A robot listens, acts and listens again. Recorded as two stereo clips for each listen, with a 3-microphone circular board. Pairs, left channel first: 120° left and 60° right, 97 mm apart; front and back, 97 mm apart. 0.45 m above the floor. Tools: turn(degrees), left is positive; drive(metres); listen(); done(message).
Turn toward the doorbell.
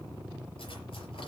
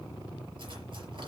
listen()
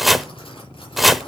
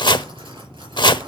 listen()
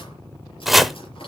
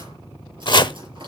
done("I can't make out a doorbell, only chopping.")